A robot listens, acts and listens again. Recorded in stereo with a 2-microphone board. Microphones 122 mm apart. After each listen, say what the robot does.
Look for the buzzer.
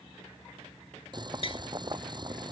Keep listening.
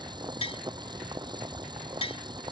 Keep listening.
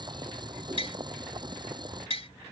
I can't make out a buzzer, only tapping and boiling.